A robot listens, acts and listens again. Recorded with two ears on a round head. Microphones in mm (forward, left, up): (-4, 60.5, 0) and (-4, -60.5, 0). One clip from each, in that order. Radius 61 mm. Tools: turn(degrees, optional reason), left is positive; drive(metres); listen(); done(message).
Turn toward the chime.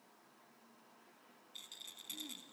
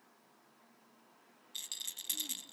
listen()
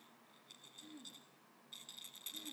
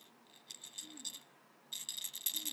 listen()
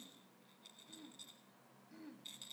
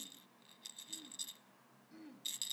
done("I can't make out a chime to turn to.")